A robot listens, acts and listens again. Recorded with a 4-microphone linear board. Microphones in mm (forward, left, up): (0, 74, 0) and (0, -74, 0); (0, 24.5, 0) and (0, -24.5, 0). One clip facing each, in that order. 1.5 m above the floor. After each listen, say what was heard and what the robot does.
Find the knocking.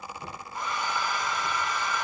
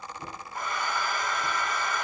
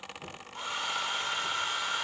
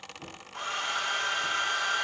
The knocking: about 45° right or 135° right. Turn 45° right.
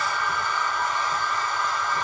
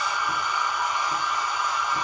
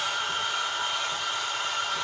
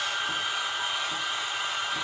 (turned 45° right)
Keep listening.
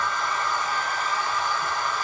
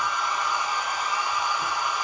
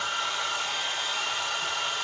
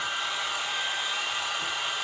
Keep listening.
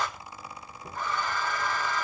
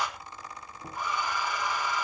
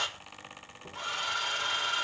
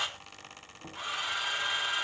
So it is at 95° right. Turn 95° right.
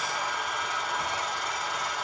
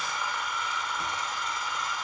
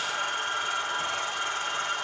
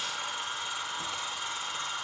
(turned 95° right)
Keep listening.
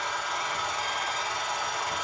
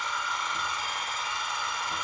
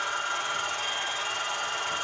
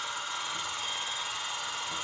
Keep listening.
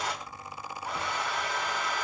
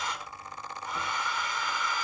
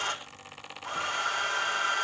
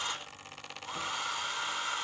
Facing where the knocking came from. I can't hear it now.